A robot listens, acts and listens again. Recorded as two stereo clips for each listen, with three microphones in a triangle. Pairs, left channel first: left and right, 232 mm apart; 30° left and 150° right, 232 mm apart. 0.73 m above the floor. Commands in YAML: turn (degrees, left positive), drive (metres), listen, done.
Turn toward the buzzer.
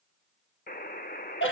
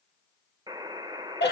turn: 140
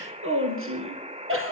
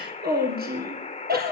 turn: -30
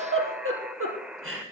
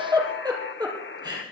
done: "Found it: a buzzer, straight ahead, 1 to 2 m away."